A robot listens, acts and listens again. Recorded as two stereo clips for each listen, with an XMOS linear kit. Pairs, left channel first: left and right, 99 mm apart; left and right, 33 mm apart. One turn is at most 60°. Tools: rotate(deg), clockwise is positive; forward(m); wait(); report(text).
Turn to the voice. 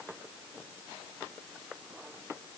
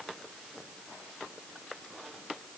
wait()
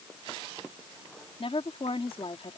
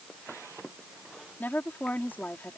rotate(-60)
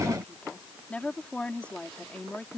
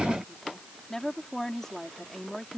rotate(-10)
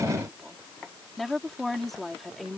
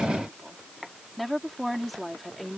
report("Facing the woman speaking.")